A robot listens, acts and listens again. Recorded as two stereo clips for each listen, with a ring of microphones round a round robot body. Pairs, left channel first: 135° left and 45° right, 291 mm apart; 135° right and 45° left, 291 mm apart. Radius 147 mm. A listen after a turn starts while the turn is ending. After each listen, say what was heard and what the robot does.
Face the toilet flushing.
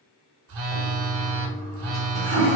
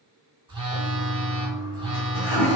The toilet flushing: 145° right. Turn 145° right.
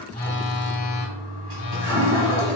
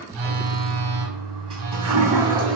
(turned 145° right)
The toilet flushing is now 25° right. Turn 25° right.
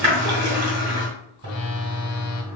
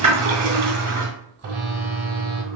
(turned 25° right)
The toilet flushing is now 10° right. Turn 10° right.
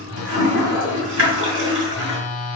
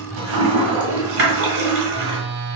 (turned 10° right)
Found it: a toilet flushing, straight ahead.